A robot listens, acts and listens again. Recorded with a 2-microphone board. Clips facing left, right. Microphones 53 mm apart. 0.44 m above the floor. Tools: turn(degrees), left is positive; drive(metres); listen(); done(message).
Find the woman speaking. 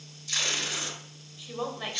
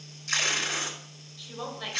turn(degrees=15)
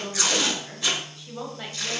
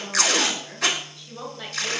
turn(degrees=30)
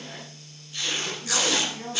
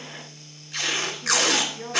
turn(degrees=25)
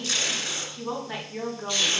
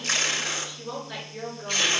turn(degrees=135)
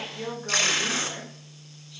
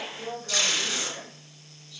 turn(degrees=35)
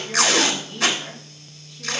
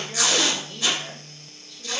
done("Found it: a woman speaking, straight ahead.")